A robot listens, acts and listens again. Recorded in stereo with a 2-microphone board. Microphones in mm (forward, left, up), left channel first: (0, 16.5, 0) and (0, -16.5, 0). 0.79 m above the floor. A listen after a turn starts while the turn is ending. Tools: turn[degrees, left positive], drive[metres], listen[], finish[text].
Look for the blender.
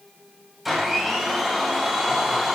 Action: turn[-30]
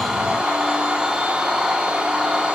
Thought: So it is at 145° right.
Action: turn[-145]
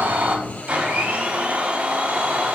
Thought: The blender is now 45° right.
Action: turn[-45]
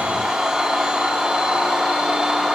Thought: The blender is now 20° right.
Action: turn[-20]
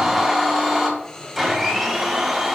Action: finish[Found it: a blender, straight ahead.]